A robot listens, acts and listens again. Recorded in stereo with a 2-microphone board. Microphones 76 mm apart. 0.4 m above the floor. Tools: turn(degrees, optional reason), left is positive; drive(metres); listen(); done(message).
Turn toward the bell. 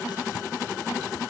listen()
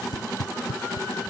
listen()
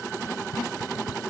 done("I can't make out a bell, only tape being pulled.")